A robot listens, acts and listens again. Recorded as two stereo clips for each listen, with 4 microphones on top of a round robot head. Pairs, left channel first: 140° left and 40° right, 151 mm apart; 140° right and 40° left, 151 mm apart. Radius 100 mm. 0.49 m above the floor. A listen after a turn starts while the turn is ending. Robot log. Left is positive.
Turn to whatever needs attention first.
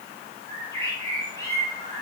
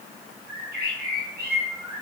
cmd idle
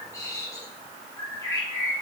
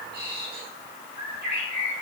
cmd idle
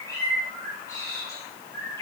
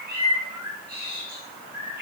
end: I can't make out anything urgent, only a bird.